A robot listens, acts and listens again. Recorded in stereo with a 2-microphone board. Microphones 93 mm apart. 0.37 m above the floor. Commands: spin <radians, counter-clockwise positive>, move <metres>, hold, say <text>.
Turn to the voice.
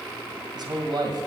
spin -0.96
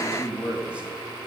spin -0.26
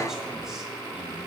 hold
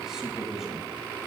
say Facing the man speaking.